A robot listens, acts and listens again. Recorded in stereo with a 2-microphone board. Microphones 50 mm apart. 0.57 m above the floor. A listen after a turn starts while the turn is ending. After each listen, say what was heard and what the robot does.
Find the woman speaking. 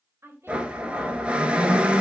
The woman speaking: about 60° right or 120° right. Turn 60° right.
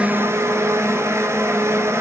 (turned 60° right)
Keep listening.
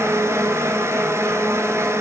Keep listening.
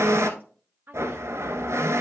So it is at 45° right. Turn 45° right.
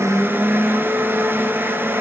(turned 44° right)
Keep listening.
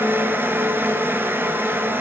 Keep listening.
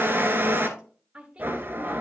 The woman speaking is now 20° right. Turn 20° right.
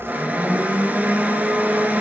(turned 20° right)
Keep listening.
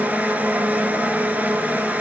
Keep listening.
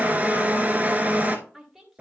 Found it: a woman speaking, straight ahead, 2 to 4 m away.